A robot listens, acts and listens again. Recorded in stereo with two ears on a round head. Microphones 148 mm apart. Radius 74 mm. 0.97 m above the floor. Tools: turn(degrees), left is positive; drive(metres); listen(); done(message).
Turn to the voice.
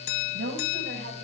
turn(degrees=-75)
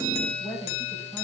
turn(degrees=10)
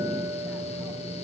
listen()
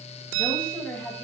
turn(degrees=10)
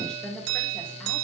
done("Found it: a woman speaking, straight ahead.")